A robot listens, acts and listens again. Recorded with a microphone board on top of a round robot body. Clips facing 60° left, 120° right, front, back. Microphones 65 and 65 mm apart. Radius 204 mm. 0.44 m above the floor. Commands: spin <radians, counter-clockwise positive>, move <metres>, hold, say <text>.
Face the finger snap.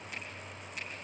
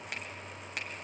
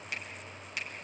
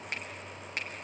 spin -2.36
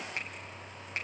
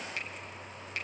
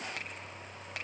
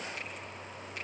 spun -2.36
say Facing the finger snap, 2 to 4 m away.